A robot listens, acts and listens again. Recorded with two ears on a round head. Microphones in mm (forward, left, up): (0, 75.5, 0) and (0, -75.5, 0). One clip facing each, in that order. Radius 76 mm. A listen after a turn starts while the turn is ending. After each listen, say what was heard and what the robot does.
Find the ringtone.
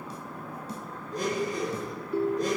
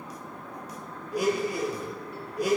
The ringtone: about 75° left or 105° left. Turn 75° left.
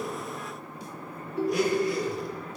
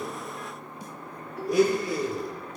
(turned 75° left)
So it is at 25° left. Turn 25° left.
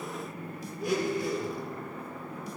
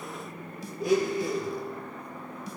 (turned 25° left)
Keep listening.
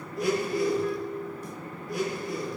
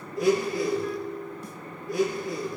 Facing the ringtone.